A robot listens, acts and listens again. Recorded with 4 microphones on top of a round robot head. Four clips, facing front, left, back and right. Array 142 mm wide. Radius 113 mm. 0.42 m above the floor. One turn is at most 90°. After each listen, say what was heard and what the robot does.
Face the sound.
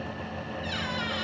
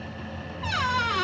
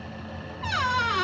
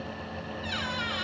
The squeak: 140° left. Turn 90° left.
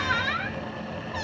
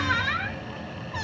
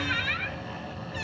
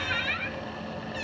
The squeak is now 45° left. Turn 45° left.
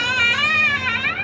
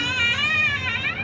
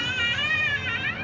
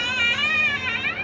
Facing the squeak.